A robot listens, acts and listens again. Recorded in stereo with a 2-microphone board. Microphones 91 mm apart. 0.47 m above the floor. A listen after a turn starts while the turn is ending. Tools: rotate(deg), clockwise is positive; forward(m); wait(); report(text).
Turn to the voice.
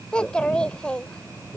rotate(-30)
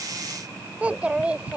rotate(15)
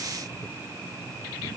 wait()
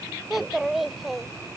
report("Facing the child speaking.")